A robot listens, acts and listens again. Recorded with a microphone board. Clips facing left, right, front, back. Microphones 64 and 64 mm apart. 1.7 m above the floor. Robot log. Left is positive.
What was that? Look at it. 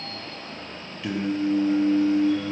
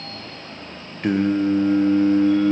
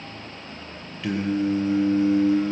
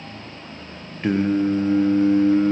note: The singing: 130° right.
cmd yaw -130
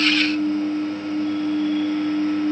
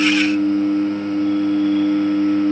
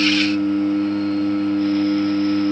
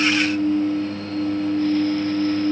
note: The singing is now 35° right.
cmd yaw -35
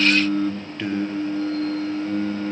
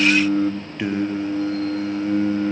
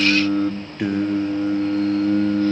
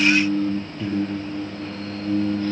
note: The singing is now 15° right.
cmd yaw -15
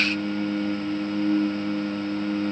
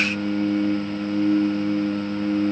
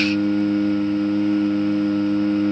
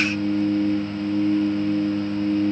note: The singing is now 10° right.
cmd yaw -10
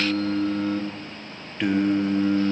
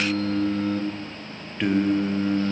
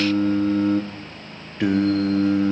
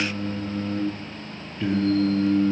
end: Facing the singing, 1 to 2 m away.